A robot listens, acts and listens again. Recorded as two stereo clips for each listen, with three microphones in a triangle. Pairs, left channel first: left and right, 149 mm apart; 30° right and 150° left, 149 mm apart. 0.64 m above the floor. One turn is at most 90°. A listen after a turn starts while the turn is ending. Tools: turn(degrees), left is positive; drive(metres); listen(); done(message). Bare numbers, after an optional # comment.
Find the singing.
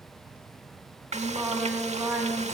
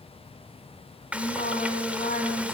# The singing: 20° right.
turn(-20)
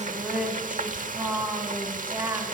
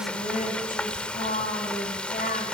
# The singing is now 15° right.
turn(-15)
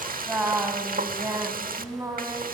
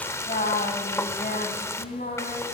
# The singing is now 20° right.
turn(-20)
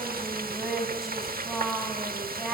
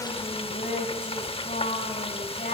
done("Found it: singing, straight ahead.")